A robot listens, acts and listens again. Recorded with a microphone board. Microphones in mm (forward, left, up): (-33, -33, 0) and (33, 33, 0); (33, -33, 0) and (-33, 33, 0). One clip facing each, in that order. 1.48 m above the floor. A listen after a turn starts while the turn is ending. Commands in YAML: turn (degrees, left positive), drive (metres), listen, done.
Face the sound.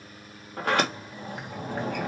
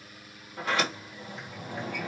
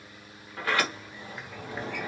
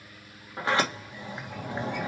turn: -160
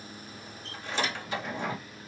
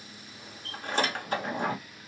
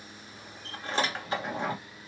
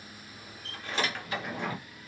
turn: 10
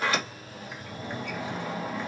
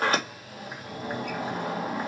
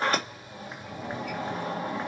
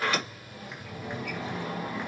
done: "Found it: a sliding door, straight ahead, 1 to 2 m away."